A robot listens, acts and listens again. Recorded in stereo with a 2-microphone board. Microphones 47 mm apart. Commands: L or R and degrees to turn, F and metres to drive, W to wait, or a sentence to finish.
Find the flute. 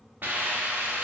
W
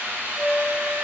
L30
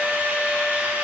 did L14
L165
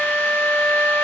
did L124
L40
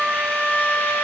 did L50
R10
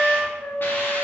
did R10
Facing the flute, under 1 m away.